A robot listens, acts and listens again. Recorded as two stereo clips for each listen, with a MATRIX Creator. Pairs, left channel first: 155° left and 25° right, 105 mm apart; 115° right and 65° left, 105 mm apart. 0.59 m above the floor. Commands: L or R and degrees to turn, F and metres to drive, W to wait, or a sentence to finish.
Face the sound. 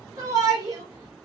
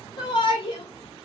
R75
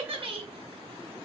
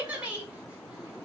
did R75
R10
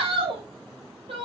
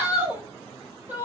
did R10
Facing the shout, 2 to 4 m away.